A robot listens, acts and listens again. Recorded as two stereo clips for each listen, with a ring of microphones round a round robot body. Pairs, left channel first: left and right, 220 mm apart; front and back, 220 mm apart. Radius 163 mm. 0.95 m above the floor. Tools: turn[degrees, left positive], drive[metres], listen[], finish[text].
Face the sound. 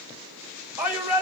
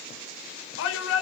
Thought: The shout: 10° right.
Action: turn[-10]
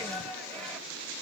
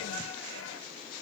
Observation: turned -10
Action: finish[Found it: a shout, straight ahead.]